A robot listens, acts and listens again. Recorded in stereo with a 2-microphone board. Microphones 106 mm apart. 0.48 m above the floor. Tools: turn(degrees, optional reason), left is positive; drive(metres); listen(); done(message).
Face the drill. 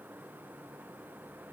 listen()
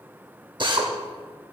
turn(degrees=-45, reason="The drill: about 45° right or 135° right.")
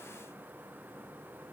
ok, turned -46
listen()
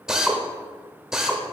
done("Found it: a drill, straight ahead, under 1 m away.")